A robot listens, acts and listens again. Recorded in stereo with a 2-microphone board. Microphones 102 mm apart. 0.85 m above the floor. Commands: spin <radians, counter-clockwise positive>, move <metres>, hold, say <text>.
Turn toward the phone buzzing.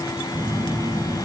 spin -0.52
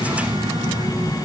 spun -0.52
spin -2.01
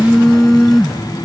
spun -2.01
say Facing the phone buzzing.